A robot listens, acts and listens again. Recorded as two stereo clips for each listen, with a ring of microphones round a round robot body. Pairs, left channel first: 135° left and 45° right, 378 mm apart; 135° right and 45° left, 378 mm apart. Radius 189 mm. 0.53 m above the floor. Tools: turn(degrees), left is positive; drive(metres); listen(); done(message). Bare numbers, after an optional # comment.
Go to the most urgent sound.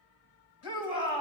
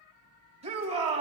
# The shout: 120° left.
turn(120)
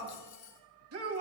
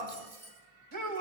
drive(1.0)
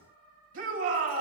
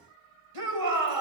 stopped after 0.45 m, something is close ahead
# The shout is now 10° left.
turn(10)
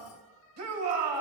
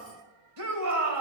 done("Something is in my way. I am facing the shout but have not reached it.")